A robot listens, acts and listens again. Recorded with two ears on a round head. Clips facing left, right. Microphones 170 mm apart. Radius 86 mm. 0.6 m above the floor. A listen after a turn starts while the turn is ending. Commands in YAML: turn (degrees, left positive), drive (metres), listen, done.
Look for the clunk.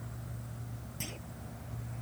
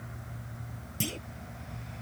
turn: -40
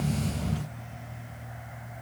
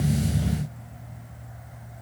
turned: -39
listen: true
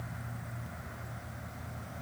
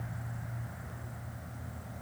done: "I heard a clunk, but can't make it out now. It was about straight ahead or 100° right."